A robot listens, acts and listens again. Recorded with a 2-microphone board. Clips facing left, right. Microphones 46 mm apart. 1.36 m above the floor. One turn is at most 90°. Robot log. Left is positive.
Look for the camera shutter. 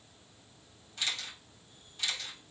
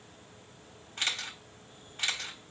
note: The camera shutter: about 45° right or 135° right.
cmd yaw -45
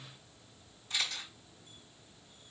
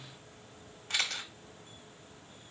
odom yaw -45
note: So it is at 90° right.
cmd yaw -90
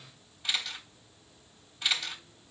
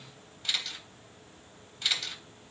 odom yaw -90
end: Found it: a camera shutter, straight ahead, 1 to 2 m away.